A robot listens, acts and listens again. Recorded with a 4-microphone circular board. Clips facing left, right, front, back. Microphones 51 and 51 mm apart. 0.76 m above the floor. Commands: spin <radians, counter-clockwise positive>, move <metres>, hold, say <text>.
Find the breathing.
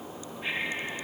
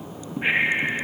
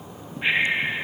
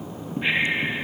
spin -1.40
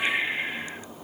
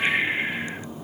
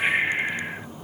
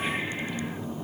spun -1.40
spin -0.35
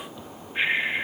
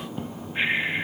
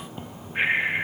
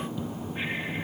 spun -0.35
say Found it: breathing, straight ahead.